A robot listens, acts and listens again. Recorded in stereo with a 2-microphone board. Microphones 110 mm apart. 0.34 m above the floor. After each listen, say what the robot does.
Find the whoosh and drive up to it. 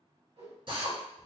Turn 65° right.
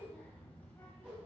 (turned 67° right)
Turn 15° right.
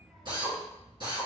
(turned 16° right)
Keep listening.
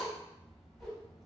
Keep listening.
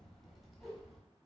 Drive 1.0 m forward.
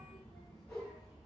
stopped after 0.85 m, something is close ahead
Arrived at the whoosh, straight ahead.